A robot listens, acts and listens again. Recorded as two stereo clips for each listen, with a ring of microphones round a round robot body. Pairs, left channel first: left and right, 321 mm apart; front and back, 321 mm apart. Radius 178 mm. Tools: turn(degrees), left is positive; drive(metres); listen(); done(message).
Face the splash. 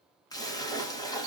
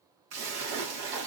turn(degrees=170)
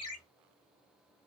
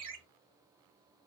done("I heard a splash from this way, but can't make it out now.")